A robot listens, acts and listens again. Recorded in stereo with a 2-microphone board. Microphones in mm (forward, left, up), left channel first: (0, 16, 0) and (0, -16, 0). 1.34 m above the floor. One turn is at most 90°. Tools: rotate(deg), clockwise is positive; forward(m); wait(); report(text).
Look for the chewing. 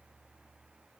wait()
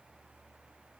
wait()
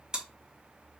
rotate(25)
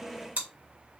rotate(90)
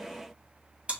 rotate(35)
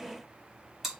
report("Found it: chewing, straight ahead, 1 to 2 m away.")